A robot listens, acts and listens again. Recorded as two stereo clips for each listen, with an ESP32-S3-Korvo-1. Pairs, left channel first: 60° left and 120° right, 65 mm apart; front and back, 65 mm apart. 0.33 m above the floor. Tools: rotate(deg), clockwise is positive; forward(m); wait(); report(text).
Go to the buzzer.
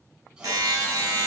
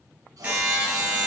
rotate(110)
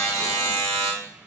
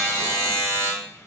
rotate(-35)
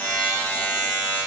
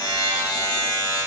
forward(1.0)
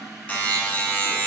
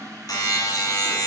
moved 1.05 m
forward(1.0)
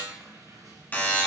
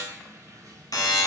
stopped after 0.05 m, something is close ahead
report("Arrived at the buzzer, straight ahead.")